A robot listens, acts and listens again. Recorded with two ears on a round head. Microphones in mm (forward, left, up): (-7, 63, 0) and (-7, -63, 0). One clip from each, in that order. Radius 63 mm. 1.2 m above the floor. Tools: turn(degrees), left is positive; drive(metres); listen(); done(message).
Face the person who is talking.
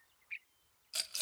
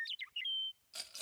listen()
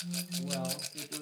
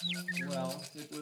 turn(degrees=-90)
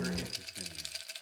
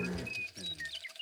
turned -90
listen()
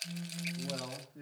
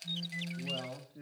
done("Found it: a man speaking, straight ahead.")